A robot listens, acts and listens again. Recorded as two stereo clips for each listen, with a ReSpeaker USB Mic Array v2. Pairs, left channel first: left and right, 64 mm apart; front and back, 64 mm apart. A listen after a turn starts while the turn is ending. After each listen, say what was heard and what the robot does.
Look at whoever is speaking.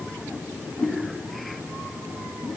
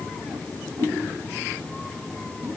Keep listening.
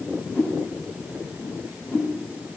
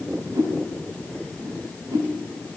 Keep listening.
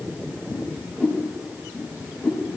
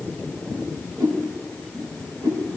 I can't make out anyone speaking, only a whoosh.